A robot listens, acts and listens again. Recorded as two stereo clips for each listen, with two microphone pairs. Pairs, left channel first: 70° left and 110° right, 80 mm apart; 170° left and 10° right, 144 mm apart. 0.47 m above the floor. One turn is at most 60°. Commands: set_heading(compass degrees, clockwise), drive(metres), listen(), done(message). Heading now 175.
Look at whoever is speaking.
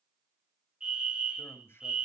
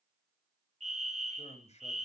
set_heading(115)
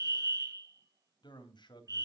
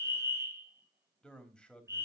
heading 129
set_heading(69)
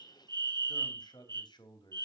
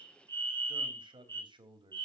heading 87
set_heading(42)
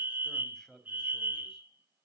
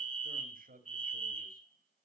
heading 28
set_heading(43)
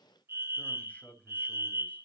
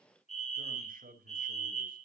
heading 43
done("Facing the man speaking.")